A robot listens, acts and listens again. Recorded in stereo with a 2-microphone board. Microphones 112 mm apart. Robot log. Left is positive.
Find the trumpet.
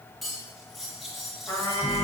note: The trumpet: about 20° left or 160° left.
cmd yaw +20
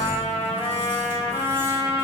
note: So it is at 140° left.
cmd yaw +140
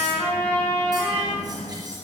note: The trumpet is now 15° left.
cmd yaw +15
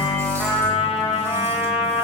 end: Facing the trumpet.